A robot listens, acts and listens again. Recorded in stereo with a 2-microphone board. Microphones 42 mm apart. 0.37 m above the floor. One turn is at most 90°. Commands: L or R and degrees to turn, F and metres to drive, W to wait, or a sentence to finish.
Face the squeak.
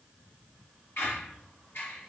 L65
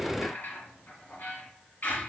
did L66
L45
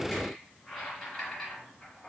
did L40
Found it: a squeak, straight ahead.